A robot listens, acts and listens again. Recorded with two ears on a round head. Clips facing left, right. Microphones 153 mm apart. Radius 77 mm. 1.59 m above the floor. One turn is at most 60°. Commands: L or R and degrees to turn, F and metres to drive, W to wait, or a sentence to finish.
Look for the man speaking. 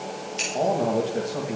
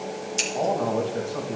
L30
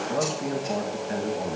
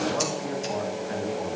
L60
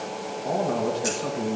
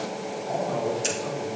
L60
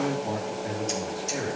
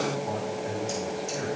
L55
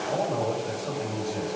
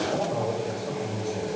Found it: a man speaking, straight ahead, 2 to 4 m away.